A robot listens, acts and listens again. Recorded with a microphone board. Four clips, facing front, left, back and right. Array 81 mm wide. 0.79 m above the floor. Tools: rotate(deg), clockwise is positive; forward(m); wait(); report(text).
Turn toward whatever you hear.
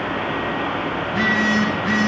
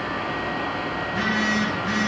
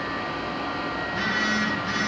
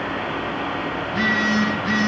rotate(30)
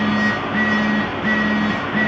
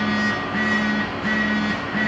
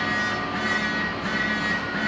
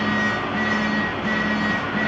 rotate(-10)
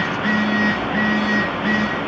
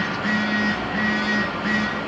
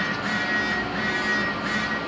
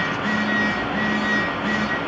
report("Found it: a phone buzzing, straight ahead, over 4 m away.")